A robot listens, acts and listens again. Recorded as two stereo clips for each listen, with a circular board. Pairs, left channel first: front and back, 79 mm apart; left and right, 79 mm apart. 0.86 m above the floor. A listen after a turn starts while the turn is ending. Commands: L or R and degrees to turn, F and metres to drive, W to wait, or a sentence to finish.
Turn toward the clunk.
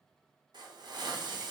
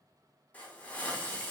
W
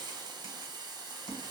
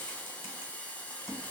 W
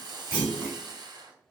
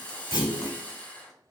L110
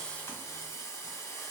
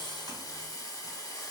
Facing where the clunk came from. I can't hear it now.